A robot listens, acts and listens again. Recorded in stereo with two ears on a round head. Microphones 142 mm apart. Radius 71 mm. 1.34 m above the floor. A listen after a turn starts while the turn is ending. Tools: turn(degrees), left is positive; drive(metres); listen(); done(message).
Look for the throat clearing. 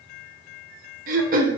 turn(degrees=-55)
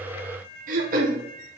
turn(degrees=-60)
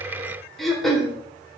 done("Found it: throat clearing, straight ahead, 1 to 2 m away.")